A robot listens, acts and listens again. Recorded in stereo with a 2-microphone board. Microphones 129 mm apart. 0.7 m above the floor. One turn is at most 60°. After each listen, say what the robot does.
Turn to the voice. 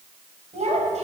Turn 60° right.
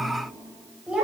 Turn 10° right.
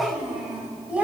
Turn 10° right.
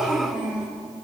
Turn 10° right.
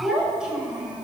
Turn 10° right.
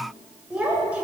Turn 10° right.
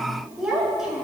Facing the child speaking, 2 to 4 m away.